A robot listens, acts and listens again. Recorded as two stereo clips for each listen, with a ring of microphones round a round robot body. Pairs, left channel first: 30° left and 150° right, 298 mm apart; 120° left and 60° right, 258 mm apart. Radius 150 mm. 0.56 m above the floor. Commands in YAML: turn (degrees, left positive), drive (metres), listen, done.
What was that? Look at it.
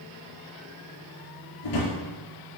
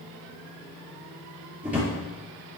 turn: 25
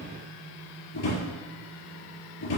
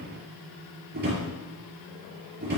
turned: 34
turn: -10
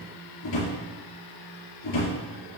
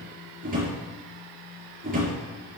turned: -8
done: "Found it: a drawer, straight ahead, over 4 m away."